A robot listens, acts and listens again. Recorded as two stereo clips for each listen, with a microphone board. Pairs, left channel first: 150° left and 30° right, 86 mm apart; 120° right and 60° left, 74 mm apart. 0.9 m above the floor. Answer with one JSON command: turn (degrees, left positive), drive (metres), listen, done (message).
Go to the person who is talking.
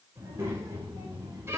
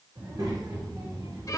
{"turn": 25}
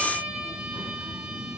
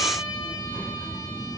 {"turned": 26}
{"drive": 1.0}
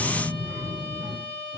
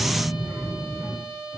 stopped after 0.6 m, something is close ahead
{"done": "Blocked. The child speaking is further on, straight ahead."}